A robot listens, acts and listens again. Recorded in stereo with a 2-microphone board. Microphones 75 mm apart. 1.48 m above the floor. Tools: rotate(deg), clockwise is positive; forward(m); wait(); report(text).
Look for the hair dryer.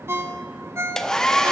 rotate(-30)
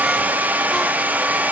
rotate(20)
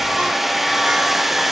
report("Found it: a hair dryer, straight ahead, under 1 m away.")